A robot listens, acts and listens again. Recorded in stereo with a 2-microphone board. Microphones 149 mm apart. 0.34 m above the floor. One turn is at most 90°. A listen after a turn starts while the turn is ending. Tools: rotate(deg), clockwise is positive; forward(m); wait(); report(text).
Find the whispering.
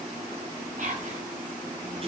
rotate(55)
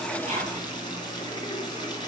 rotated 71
wait()
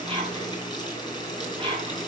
rotate(45)
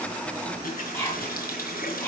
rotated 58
rotate(-15)
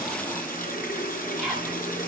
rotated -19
report("Facing the whispering, 2 to 4 m away.")